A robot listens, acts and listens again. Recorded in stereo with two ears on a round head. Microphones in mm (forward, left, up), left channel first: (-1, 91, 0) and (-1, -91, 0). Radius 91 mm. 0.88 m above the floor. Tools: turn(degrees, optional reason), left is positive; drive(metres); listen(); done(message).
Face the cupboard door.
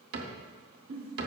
turn(degrees=-55, reason="The cupboard door: about 55° right or 125° right.")
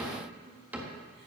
turn(degrees=-10, reason="So it is at 10° right.")
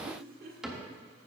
done("Facing the cupboard door, 1 to 2 m away.")